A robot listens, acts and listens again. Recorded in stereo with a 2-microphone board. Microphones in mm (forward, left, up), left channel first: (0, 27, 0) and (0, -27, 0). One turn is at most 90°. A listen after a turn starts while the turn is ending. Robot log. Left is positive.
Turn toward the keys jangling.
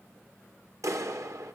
cmd idle
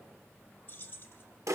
note: The keys jangling: about 40° left or 140° left.
cmd yaw +40
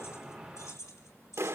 note: So it is at 100° left.
cmd yaw +90
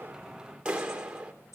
note: Nothing new. It was at 10° left.
cmd yaw +10
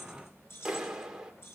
note: The keys jangling is now 50° left.
cmd yaw +50
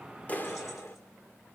cmd idle
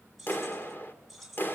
end: Found it: keys jangling, straight ahead, over 4 m away.